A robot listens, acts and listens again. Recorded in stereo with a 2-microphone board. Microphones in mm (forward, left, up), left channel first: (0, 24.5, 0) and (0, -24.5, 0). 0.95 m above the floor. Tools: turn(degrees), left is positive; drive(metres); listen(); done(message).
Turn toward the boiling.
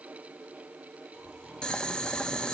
turn(degrees=15)
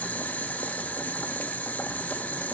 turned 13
turn(degrees=150)
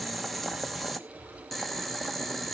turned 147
done("Found it: boiling, straight ahead.")